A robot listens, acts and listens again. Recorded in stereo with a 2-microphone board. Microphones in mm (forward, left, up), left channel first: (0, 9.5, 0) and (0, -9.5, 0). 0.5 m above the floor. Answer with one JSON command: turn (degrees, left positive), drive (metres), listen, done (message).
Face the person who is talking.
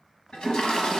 {"listen": true}
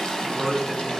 {"turn": 25}
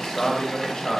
{"turn": 115}
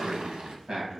{"turn": -50}
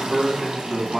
{"turn": -25}
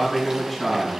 {"done": "Found it: a man speaking, straight ahead, 2 to 4 m away."}